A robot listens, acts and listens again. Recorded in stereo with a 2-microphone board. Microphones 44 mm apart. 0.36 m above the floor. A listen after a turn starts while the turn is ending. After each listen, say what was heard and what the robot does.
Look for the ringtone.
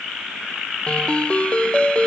The ringtone: about 25° left or 155° left. Turn 25° left.
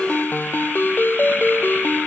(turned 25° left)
So it is at 130° left. Turn 130° left.
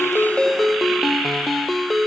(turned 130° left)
Facing the ringtone.